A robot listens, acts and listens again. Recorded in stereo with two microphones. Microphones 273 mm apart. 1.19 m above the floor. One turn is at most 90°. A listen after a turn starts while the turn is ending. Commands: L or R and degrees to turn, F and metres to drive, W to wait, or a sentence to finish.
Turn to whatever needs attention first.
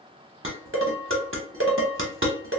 W
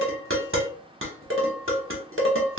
W
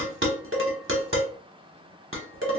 I can't make out anything urgent to turn to.